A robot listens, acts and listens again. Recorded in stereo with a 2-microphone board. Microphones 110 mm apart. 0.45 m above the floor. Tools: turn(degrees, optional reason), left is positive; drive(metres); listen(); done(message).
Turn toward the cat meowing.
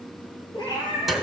turn(degrees=45, reason="The cat meowing: about 45° left or 135° left.")
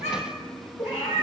turn(degrees=95, reason="So it is at 95° left.")
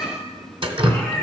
done("Facing the cat meowing, over 4 m away.")